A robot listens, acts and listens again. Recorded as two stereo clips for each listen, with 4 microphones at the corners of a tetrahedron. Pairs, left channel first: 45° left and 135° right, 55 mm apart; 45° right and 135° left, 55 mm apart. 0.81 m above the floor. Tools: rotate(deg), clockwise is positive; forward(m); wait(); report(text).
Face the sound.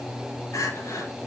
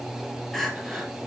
rotate(-40)
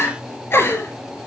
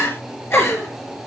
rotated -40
report("Facing the crying, 2 to 4 m away.")